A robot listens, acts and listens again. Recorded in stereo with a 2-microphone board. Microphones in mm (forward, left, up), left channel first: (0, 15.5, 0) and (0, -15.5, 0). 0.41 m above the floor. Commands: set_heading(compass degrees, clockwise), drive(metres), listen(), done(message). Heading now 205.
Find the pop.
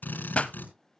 set_heading(165)
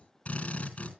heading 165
listen()
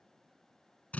done("I heard a pop, but can't make it out now. It was about straight ahead or 100° left.")